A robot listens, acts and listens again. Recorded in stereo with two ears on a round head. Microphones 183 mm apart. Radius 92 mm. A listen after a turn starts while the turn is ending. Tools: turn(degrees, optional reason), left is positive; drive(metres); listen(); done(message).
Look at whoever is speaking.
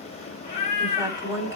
turn(degrees=-20, reason="The woman speaking: about 20° right or 160° right.")
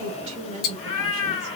turn(degrees=-135, reason="So it is at 135° right.")
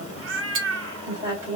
turn(degrees=-20, reason="The woman speaking is now 20° right.")
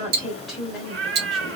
done("Found it: a woman speaking, straight ahead.")